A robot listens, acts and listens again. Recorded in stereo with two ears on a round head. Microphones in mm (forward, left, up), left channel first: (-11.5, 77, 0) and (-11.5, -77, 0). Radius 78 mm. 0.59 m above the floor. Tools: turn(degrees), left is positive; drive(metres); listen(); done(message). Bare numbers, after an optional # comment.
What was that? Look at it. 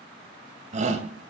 # The shout: about 45° right or 135° right.
turn(-45)
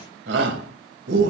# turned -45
# So it is at 90° right.
turn(-90)
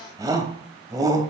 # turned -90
# The shout is now 20° right.
turn(-20)
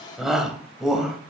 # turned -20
done("Found it: a shout, straight ahead.")